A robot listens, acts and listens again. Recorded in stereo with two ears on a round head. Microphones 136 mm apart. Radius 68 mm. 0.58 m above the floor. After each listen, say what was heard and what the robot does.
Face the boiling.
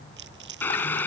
Turn 30° left.
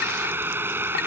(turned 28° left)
So it is at 15° right. Turn 15° right.
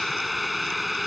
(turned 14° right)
Found it: boiling, straight ahead.